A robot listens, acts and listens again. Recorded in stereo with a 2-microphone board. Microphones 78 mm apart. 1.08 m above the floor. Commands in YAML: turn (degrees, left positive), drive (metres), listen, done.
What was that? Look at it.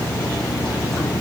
listen: true
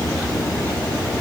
listen: true
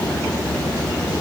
done: "I can't make out anything."